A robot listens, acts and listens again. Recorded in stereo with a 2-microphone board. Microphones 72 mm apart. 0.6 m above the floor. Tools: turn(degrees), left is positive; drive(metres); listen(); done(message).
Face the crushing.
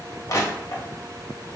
turn(degrees=50)
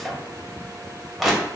done("Facing the crushing.")